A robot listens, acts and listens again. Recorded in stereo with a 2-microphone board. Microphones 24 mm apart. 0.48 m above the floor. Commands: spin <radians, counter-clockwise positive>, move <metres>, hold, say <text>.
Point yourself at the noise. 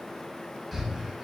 spin 0.52
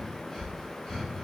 spin 2.53
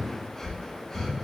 spin 0.17
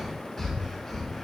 say Facing the breathing, under 1 m away.